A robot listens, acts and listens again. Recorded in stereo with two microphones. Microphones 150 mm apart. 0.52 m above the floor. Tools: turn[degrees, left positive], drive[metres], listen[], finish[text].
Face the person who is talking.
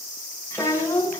Thought: The child speaking: about 20° left or 160° left.
Action: turn[20]
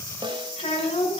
Thought: So it is at 140° left.
Action: turn[140]
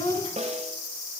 Thought: The child speaking is now 45° left.
Action: turn[45]
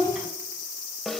Action: finish[Found it: a child speaking, straight ahead.]